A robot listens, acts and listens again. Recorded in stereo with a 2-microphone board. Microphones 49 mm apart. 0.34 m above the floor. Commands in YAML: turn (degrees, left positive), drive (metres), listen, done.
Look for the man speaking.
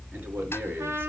turn: -45
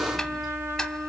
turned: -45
listen: true
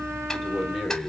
done: "Found it: a man speaking, straight ahead."